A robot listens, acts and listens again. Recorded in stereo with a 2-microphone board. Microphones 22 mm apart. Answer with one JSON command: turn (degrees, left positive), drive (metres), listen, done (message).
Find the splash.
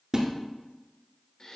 {"turn": -35}
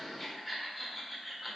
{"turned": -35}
{"listen": true}
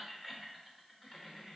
{"done": "I heard a splash, but can't make it out now. It was about straight ahead or 110° right."}